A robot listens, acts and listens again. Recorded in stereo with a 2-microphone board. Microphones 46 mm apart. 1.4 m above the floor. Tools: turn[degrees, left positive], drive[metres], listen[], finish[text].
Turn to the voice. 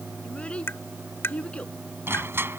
Thought: The child speaking: about 25° left or 155° left.
Action: turn[25]
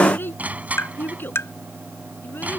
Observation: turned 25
Thought: So it is at 130° left.
Action: turn[130]
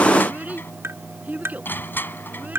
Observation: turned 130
Thought: The child speaking is now 35° right.
Action: turn[-35]
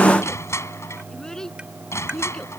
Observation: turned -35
Thought: The child speaking is now 15° left.
Action: turn[15]
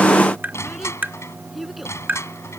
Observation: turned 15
Action: finish[Facing the child speaking.]